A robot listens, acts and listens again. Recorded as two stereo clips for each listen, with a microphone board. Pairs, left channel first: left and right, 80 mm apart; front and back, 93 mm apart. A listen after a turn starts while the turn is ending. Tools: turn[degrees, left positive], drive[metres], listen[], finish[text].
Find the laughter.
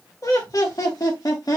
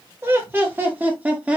Thought: The laughter: 110° left.
Action: turn[110]
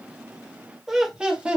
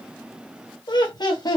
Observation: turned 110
Thought: The laughter is now 20° right.
Action: turn[-20]
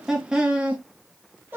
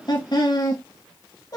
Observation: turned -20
Thought: The laughter is now 35° right.
Action: turn[-35]
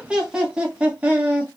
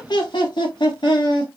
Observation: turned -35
Thought: The laughter is now 25° right.
Action: turn[-25]
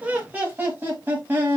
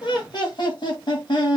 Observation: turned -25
Thought: The laughter is now 25° right.
Action: turn[-25]
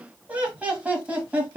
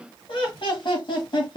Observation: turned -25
Thought: The laughter is now 20° right.
Action: turn[-20]
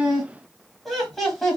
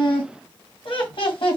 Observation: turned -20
Action: finish[Found it: laughter, straight ahead.]